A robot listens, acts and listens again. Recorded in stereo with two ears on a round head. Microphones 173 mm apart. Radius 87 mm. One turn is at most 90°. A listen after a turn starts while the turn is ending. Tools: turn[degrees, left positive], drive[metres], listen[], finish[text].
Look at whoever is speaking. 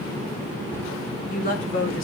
Thought: The woman speaking: about 50° left or 130° left.
Action: turn[50]
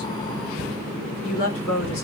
Thought: So it is at 80° left.
Action: turn[80]
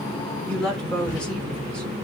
Action: finish[Found it: a woman speaking, straight ahead.]